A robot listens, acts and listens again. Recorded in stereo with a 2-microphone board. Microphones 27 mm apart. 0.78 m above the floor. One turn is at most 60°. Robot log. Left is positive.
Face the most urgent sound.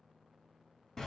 cmd idle
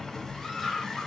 note: The scream: about 15° left or 165° left.
cmd yaw +15
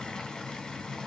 cmd idle
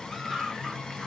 end: Found it: a scream, straight ahead, 1 to 2 m away.